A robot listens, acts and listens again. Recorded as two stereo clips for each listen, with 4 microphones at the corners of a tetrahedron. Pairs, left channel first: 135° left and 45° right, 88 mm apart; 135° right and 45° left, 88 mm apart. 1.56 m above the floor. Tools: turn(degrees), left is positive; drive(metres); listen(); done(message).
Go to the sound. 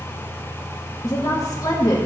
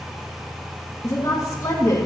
turn(degrees=175)
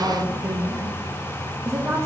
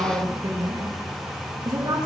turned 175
turn(degrees=10)
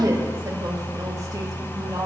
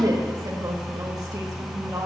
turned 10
drive(metres=1.0)
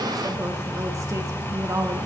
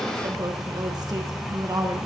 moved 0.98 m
drive(metres=1.0)
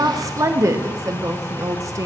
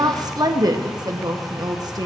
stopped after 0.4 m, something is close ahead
done("I am next to the woman speaking.")